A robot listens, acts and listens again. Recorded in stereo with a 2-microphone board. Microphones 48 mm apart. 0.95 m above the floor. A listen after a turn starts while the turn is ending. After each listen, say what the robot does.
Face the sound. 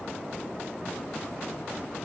Keep listening.
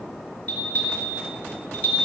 Turn 30° left.
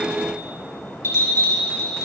Turn 115° left.
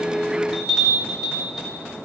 Found it: a bell, straight ahead, 2 to 4 m away.